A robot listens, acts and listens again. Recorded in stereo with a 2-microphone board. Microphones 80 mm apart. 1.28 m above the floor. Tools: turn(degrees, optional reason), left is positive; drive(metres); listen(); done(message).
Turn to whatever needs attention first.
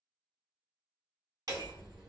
listen()
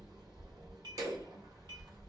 listen()
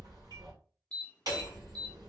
turn(degrees=15, reason="The alarm: about 15° left or 165° left.")
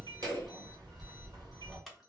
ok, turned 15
listen()
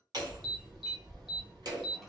listen()
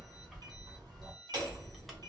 done("I heard an alarm, but can't make it out now. It was about straight ahead or 150° left.")